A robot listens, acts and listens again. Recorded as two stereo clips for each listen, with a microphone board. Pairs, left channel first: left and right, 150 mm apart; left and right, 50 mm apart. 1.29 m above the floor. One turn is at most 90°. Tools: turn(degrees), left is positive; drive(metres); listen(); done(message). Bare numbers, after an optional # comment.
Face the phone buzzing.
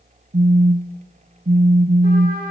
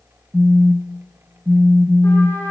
# The phone buzzing: about 65° right or 115° right.
turn(-65)
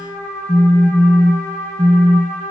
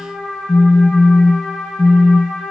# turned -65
# So it is at 10° right.
turn(-10)
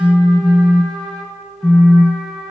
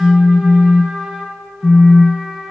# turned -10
done("Facing the phone buzzing.")